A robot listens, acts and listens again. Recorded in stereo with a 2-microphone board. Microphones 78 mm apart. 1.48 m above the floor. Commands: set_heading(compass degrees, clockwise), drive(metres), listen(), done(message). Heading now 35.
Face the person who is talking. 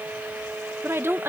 set_heading(65)
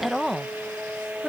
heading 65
done("Facing the woman speaking.")